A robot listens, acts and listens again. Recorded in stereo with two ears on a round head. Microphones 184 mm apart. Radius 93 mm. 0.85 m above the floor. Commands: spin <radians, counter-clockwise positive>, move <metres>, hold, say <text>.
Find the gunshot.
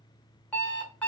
hold
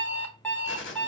spin 1.13
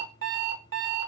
hold
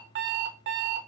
say I heard a gunshot, but can't make it out now. It was about straight ahead or 50° left.